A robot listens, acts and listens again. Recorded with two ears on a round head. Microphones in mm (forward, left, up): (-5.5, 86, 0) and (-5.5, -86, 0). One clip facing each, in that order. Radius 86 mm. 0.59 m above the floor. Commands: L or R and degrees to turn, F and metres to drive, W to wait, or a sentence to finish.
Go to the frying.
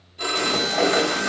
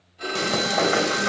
R45
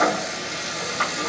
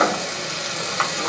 R85
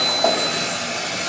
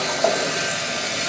R30
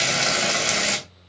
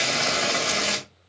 L15
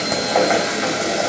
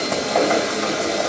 F1.0
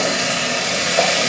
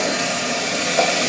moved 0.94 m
F1.0
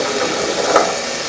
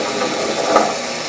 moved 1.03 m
F1.0
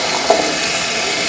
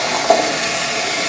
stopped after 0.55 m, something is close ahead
Arrived at the frying, straight ahead.